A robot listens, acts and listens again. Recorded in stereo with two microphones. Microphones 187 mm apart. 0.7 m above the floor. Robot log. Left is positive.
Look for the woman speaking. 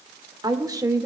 note: The woman speaking: about 15° right or 165° right.
cmd yaw -15
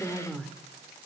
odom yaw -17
cmd yaw +30
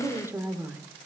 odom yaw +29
note: So it is at 10° right.
cmd yaw -10
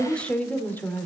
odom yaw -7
note: The woman speaking is now 10° left.
cmd yaw +10
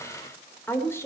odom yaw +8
note: The woman speaking is now 15° left.
cmd yaw +15
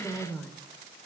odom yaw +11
note: The woman speaking is now 10° left.
cmd yaw +10
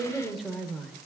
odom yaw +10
end: Facing the woman speaking, 2 to 4 m away.